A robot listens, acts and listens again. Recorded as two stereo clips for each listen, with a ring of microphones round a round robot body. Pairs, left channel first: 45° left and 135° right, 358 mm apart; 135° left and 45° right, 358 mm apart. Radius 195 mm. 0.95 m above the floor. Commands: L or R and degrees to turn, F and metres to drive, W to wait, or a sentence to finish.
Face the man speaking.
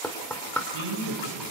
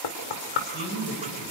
R170
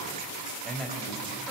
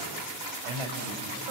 R45
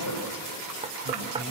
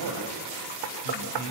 Facing the man speaking.